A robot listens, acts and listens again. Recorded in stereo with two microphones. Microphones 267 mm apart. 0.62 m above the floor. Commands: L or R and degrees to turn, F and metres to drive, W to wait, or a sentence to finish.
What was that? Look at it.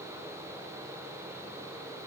W
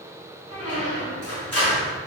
L65
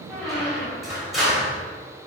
Facing the squeak, 2 to 4 m away.